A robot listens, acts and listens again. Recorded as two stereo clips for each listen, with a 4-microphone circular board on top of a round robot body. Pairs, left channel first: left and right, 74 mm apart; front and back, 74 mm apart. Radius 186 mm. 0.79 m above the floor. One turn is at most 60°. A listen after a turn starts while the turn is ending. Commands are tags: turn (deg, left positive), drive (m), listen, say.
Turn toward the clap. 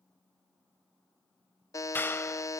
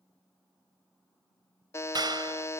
<turn deg="60"/>
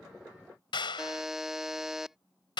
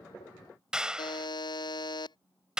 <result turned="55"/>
<turn deg="60"/>
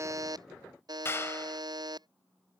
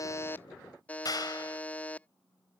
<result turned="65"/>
<turn deg="35"/>
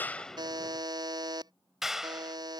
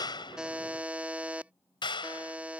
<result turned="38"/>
<say>Found it: a clap, straight ahead.</say>